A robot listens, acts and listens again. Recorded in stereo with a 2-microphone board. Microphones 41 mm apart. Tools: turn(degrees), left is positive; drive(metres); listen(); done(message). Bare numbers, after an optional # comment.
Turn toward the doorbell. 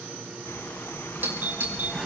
# The doorbell: about 40° right or 140° right.
turn(-40)
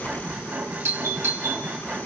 # So it is at 100° right.
turn(-100)
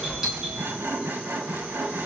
# The doorbell is now 15° right.
turn(-15)
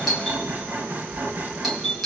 done("Found it: a doorbell, straight ahead, over 4 m away.")